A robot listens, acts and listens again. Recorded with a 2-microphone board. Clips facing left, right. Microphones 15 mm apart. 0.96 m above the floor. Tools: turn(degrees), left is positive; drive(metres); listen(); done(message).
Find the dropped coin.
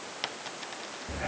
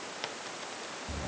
turn(degrees=15)
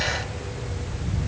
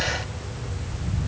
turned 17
listen()
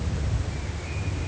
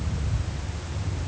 done("I heard a dropped coin, but can't make it out now. It was about straight ahead or 145° left.")